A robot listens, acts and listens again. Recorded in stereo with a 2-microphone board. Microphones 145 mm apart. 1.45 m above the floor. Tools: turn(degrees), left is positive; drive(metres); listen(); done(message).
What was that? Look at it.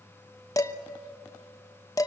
turn(degrees=25)
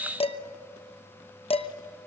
turn(degrees=130)
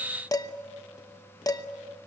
turn(degrees=30)
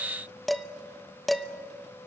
done("Found it: dishes clattering, straight ahead, under 1 m away.")